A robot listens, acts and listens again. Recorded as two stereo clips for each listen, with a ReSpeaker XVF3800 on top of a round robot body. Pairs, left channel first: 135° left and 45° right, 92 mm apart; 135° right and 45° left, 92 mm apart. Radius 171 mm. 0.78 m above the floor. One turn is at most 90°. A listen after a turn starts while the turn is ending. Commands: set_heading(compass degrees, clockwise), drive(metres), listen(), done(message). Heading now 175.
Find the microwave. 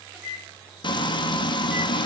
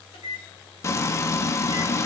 set_heading(265)
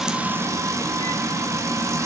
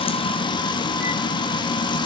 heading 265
set_heading(305)
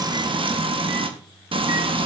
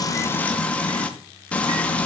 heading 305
listen()
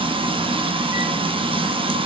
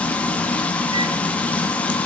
done("I heard a microwave from this way, but can't make it out now.")